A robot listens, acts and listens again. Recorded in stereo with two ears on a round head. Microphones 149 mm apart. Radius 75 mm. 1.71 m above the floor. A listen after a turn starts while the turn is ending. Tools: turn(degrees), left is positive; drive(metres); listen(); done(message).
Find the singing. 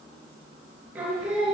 turn(degrees=-30)
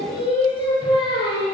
turn(degrees=35)
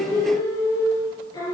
turn(degrees=25)
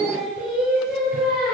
done("Found it: singing, straight ahead, over 4 m away.")